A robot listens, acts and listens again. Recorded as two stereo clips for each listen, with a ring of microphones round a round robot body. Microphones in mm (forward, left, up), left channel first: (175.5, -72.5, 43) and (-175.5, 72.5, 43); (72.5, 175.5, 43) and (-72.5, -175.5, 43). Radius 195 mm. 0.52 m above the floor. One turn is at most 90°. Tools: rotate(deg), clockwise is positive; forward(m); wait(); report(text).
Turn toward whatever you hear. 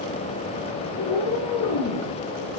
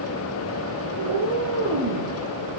rotate(70)
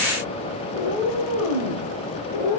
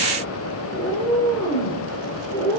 report("Facing the cat meowing.")